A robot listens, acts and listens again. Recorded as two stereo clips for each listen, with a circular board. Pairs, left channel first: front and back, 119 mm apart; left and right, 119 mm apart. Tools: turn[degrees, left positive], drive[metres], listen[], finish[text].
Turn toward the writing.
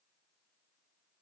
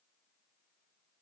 Action: listen[]
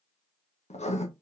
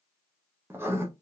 Thought: The writing: 20° right.
Action: turn[-20]
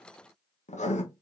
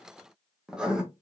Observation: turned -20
Action: finish[Facing the writing, 1 to 2 m away.]